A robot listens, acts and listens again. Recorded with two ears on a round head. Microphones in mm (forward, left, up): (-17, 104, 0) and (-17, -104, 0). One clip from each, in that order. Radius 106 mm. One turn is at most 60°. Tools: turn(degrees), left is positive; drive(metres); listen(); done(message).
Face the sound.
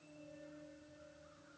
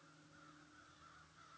listen()
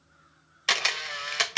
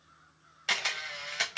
turn(degrees=35)
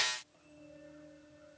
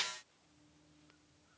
listen()
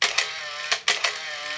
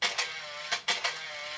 turn(degrees=60)
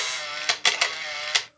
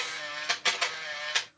turn(degrees=55)
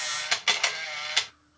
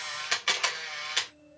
turn(degrees=10)
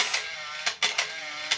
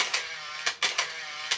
done("Found it: a camera shutter, straight ahead, 1 to 2 m away.")